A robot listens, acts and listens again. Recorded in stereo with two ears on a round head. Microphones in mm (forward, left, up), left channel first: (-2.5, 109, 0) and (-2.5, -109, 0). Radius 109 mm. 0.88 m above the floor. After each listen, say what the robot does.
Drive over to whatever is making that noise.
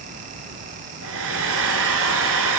Turn 60° right.
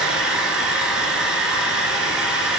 Drive 1.0 m forward.
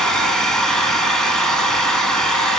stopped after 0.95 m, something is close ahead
Arrived at the hair dryer, straight ahead.